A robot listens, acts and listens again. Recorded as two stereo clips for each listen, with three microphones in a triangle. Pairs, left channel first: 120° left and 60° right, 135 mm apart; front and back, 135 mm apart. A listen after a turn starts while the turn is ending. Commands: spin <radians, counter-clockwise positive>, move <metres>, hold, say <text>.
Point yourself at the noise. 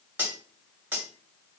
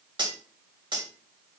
spin -2.36
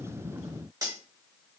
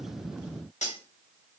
say Found it: cutlery clinking, straight ahead.